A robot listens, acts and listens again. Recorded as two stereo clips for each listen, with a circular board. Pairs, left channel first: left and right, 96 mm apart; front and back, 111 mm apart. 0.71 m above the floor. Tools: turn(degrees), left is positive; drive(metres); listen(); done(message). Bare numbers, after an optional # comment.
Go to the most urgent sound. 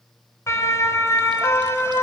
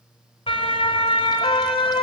# The siren: 30° left.
turn(30)
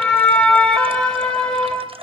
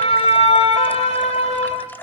# The siren is now 10° left.
turn(10)
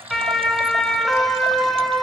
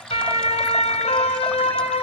drive(1.0)
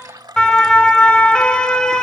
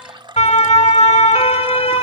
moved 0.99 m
# The siren is now 10° left.
turn(10)
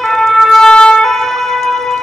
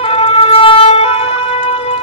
drive(1.0)
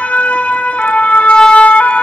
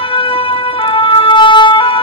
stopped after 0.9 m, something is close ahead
# The siren is now 15° left.
turn(15)
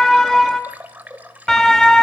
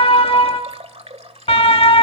done("Arrived at the siren, straight ahead.")